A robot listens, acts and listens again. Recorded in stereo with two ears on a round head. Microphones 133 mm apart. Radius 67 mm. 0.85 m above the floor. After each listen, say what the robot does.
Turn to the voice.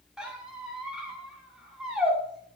Keep listening.
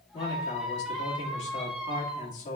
Turn 50° left.
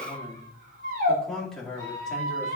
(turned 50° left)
Found it: a man speaking, straight ahead, 2 to 4 m away.